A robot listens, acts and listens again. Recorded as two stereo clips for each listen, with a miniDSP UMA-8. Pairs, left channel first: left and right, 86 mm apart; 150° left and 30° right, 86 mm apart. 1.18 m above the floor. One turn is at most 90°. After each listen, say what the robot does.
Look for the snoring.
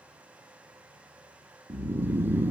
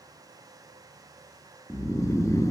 Turn 90° right.
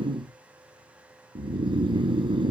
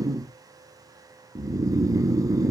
Turn 75° right.
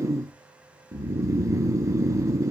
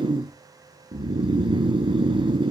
Turn 40° right.
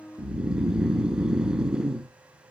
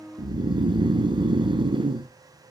Turn 10° right.
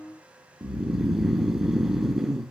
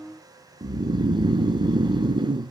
Facing the snoring.